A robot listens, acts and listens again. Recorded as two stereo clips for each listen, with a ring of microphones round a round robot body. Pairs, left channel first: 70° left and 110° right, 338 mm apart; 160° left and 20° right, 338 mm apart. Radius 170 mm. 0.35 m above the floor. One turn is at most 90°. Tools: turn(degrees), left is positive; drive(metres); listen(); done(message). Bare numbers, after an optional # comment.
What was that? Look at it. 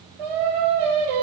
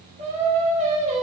# The singing: 95° right.
turn(-90)
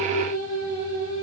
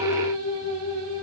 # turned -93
done("Found it: singing, straight ahead, over 4 m away.")